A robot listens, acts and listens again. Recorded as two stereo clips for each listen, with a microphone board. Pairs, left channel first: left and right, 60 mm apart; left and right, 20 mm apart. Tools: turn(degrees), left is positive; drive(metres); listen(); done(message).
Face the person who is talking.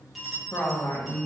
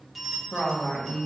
turn(degrees=50)
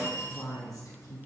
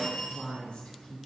turn(degrees=60)
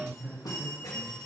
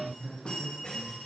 turn(degrees=-15)
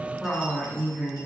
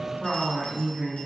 turn(degrees=-10)
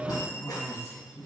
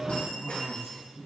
done("Found it: a woman speaking, straight ahead, 2 to 4 m away.")